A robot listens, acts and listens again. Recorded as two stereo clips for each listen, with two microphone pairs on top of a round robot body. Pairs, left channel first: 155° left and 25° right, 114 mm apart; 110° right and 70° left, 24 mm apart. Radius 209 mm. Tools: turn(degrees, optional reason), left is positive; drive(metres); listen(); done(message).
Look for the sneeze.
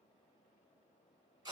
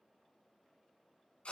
listen()
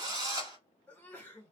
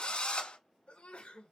turn(degrees=-130, reason="The sneeze: 130° right.")
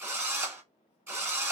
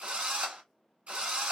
done("I heard a sneeze from this way, but can't make it out now.")